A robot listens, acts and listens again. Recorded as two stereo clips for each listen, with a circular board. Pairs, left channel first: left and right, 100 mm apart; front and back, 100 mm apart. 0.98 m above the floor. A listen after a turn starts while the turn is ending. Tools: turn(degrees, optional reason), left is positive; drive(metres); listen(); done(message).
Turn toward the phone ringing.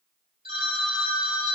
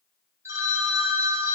turn(degrees=-120, reason="The phone ringing: 120° right.")
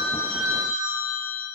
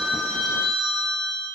turn(degrees=-30, reason="The phone ringing is now 30° right.")
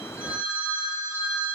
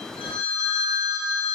turn(degrees=-15, reason="The phone ringing is now 15° right.")
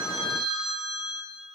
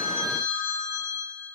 done("Facing the phone ringing, 2 to 4 m away.")